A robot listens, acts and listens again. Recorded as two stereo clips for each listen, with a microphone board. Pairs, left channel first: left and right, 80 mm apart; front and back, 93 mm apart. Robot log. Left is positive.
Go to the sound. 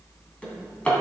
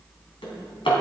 note: The drawer: 15° left.
cmd yaw +15
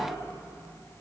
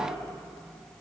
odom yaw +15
cmd idle
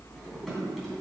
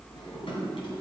cmd idle
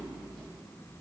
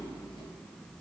end: Facing where the drawer came from. I can't hear it now. I did not reach it.